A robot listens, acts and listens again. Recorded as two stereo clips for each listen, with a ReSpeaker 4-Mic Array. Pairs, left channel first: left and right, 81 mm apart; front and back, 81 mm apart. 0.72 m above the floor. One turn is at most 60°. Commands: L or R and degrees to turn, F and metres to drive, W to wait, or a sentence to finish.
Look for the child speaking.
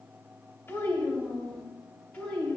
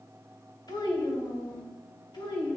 L15
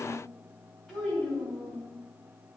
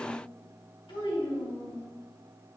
Found it: a child speaking, straight ahead, 2 to 4 m away.